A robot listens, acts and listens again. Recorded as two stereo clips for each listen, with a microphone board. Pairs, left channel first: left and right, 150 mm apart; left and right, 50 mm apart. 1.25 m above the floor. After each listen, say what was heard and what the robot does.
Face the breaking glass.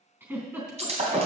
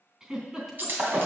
The breaking glass: about 45° right or 135° right. Turn 45° right.
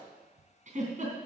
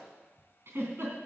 Keep listening.
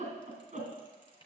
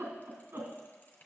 I heard breaking glass, but can't make it out now. It was about straight ahead or 90° right.